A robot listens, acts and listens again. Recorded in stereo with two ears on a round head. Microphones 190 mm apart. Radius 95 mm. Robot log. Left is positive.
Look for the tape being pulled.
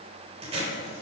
note: The tape being pulled: about 30° right or 150° right.
cmd yaw -30
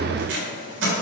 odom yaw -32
note: So it is at 120° right.
cmd yaw -120
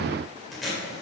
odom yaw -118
end: Facing the tape being pulled.